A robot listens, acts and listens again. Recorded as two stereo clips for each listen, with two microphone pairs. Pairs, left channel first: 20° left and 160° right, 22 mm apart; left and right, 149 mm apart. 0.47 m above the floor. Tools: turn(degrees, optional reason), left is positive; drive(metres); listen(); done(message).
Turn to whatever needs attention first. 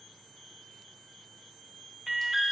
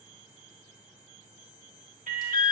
turn(degrees=-85, reason="The alarm: 85° right.")
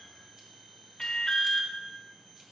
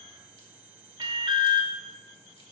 turn(degrees=-35, reason="The alarm is now 35° right.")
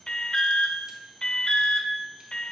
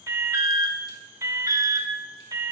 turn(degrees=-20, reason="The alarm is now 20° right.")
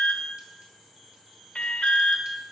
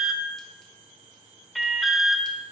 done("Found it: an alarm, straight ahead.")